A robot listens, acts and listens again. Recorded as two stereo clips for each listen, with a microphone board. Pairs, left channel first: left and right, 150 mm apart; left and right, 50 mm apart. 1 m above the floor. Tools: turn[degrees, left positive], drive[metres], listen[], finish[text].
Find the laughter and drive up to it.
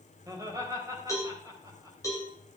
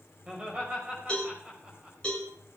Thought: The laughter: about 25° right or 155° right.
Action: turn[-25]
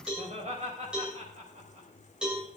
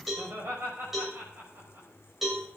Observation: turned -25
Thought: So it is at 130° right.
Action: turn[-130]
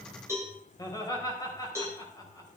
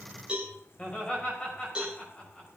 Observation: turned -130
Thought: The laughter is now 25° left.
Action: turn[25]
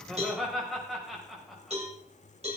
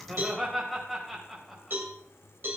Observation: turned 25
Action: drive[1.0]
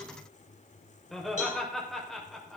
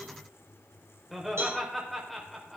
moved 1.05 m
Action: drive[1.0]
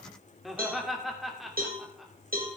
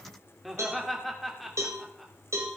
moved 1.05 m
Action: drive[1.0]
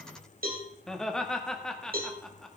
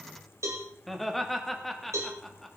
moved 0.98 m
Action: drive[1.0]
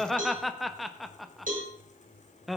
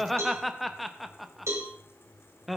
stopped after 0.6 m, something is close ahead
Action: finish[I am next to the laughter.]